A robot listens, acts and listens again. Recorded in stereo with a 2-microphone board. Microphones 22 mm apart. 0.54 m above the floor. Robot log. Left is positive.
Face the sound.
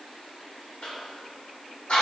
note: The cough: about 60° left or 120° left.
cmd yaw +60
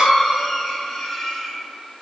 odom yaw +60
note: So it is at 20° left.
cmd yaw +20
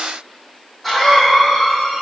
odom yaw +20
end: Found it: a cough, straight ahead, 1 to 2 m away.